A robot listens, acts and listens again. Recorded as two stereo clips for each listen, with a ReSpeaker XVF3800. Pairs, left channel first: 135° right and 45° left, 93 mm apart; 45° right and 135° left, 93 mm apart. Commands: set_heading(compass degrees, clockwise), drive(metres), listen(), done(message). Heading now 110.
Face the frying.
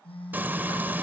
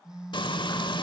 set_heading(135)
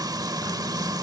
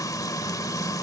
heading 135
done("Facing the frying.")